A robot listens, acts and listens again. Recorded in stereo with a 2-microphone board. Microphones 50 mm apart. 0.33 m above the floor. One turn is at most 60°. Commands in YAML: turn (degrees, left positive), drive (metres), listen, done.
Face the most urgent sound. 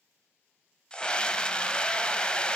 turn: 20
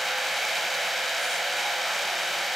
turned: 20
done: "Found it: a scream, straight ahead, 1 to 2 m away."